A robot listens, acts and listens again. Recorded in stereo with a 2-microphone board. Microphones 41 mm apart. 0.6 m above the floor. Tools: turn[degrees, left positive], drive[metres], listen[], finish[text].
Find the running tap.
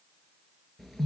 Action: listen[]
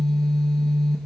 Action: listen[]
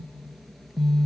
Action: finish[I can't make out a running tap to turn to.]